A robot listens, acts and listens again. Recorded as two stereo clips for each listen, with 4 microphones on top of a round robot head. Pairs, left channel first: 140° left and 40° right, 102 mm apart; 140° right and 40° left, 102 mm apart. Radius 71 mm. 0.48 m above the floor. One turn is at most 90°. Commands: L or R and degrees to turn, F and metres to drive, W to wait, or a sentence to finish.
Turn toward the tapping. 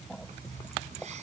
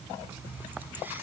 W
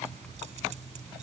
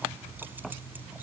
W
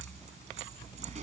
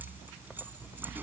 I can't make out tapping to turn to.